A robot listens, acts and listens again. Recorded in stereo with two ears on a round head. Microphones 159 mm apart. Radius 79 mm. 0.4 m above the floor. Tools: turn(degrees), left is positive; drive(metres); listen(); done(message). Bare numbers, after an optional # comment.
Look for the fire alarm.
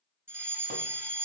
turn(-30)
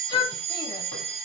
# So it is at 135° right.
turn(-135)
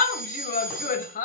# The fire alarm is now 40° right.
turn(-40)
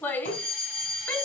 done("Found it: a fire alarm, straight ahead.")